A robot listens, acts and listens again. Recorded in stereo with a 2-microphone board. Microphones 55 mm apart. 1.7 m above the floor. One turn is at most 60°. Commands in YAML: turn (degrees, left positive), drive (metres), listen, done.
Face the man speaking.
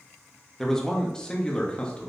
turn: 20
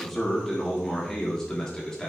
turn: 30
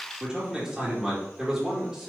turn: -10
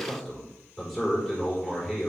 done: "Facing the man speaking, over 4 m away."